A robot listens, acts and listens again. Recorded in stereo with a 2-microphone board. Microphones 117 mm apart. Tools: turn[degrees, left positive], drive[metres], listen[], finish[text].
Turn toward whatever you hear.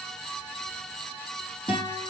Thought: The guitar: about 45° left or 135° left.
Action: turn[45]
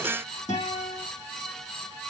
Thought: So it is at 85° left.
Action: turn[85]
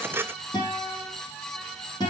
Thought: The guitar is now 40° left.
Action: turn[40]
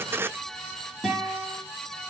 Action: finish[Found it: a guitar, straight ahead.]